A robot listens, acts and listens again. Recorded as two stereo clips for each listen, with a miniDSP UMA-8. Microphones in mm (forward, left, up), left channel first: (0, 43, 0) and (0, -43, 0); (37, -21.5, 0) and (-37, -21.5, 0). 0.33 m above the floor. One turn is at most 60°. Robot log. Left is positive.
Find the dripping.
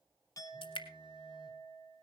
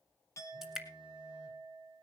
note: The dripping: 95° left.
cmd yaw +60
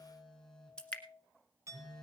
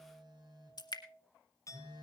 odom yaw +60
note: The dripping is now 10° left.
cmd yaw +10
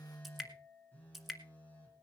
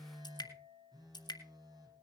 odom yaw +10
end: Found it: dripping, straight ahead.